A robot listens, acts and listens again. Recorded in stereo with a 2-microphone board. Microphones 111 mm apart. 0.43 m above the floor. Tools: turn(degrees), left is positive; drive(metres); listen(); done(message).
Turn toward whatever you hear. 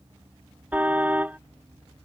turn(degrees=-30)
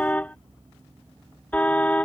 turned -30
turn(degrees=15)
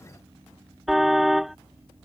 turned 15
done("Found it: a car horn, straight ahead.")